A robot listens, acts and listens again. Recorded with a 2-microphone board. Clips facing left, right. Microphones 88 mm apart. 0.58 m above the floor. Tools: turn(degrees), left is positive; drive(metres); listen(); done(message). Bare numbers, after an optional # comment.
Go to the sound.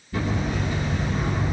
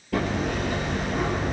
turn(-90)
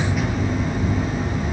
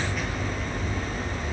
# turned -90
# So it is at 10° left.
turn(10)
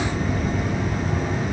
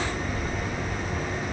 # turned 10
drive(1.0)
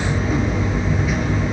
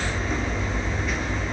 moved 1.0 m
drive(1.0)
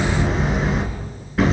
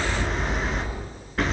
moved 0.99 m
drive(1.0)
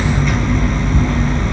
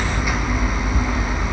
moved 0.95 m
# The hammering is now 10° right.
turn(-10)
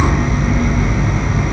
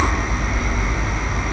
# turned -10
drive(1.0)
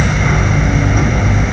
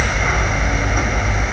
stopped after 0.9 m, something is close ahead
done("I am next to the hammering.")